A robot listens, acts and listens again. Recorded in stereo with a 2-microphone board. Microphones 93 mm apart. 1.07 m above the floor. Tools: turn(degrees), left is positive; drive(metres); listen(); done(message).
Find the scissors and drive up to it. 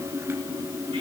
listen()
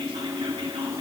listen()
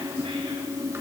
done("I can't make out scissors.")